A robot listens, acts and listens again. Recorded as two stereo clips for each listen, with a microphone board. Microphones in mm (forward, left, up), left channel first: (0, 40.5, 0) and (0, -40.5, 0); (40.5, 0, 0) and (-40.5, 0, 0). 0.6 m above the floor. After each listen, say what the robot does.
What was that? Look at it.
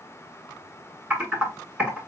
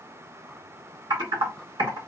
Turn 170° right.
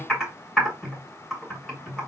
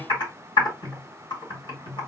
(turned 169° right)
Facing the typing on a keyboard, 2 to 4 m away.